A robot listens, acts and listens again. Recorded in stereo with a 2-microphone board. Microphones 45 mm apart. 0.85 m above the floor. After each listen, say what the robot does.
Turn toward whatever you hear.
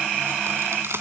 Turn 70° right.
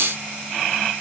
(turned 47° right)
Keep listening.
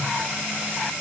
I heard a crack, but can't make it out now. It was about 25° right or 60° right.